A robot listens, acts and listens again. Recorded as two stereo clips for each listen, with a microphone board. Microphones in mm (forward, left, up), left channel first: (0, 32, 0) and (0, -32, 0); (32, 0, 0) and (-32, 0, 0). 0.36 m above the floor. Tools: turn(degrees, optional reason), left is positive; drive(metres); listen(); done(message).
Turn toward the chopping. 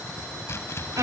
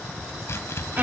turn(degrees=45, reason="The chopping: 45° left.")
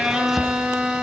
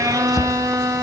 done("Found it: chopping, straight ahead.")